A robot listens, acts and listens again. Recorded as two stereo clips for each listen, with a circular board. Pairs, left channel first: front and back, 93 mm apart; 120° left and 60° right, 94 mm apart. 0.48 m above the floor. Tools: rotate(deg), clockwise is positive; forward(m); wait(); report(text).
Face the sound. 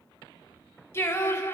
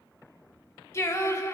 rotate(-60)
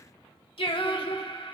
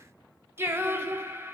report("Found it: singing, straight ahead.")